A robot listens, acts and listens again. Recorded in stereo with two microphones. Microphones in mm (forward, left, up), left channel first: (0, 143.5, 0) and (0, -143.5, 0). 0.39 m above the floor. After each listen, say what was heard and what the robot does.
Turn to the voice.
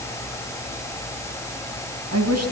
The woman speaking: about 65° right or 115° right. Turn 65° right.
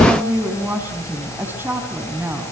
So it is at 10° right. Turn 10° right.
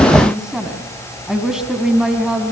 Facing the woman speaking.